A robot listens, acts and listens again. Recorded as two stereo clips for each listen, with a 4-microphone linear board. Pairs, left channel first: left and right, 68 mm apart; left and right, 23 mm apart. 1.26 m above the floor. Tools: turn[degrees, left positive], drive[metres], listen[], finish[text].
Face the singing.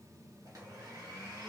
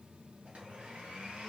Action: listen[]
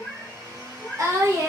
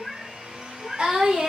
Thought: The singing: about 60° right or 120° right.
Action: turn[-60]
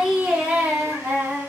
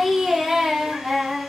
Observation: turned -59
Thought: So it is at 35° right.
Action: turn[-35]
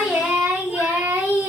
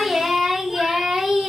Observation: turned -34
Thought: The singing is now 25° right.
Action: turn[-25]
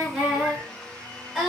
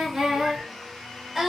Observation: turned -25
Action: finish[Facing the singing.]